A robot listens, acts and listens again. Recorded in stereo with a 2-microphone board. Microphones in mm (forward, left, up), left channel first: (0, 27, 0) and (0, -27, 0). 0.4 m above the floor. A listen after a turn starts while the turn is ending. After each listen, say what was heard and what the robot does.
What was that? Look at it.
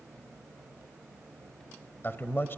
The man speaking: about 45° left or 135° left. Turn 45° left.
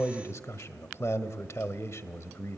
So it is at 85° left. Turn 85° left.
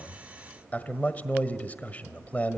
The man speaking is now 35° left. Turn 35° left.
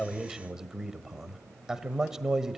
The man speaking is now 10° right. Turn 10° right.
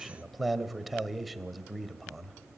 Facing the man speaking.